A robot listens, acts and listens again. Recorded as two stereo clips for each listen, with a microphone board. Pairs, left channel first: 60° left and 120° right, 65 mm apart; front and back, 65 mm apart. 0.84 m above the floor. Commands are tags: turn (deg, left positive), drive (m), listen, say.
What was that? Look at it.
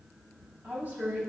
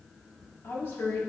<turn deg="-60"/>
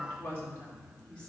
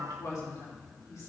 <turn deg="-10"/>
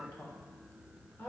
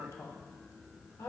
<say>Facing the woman speaking.</say>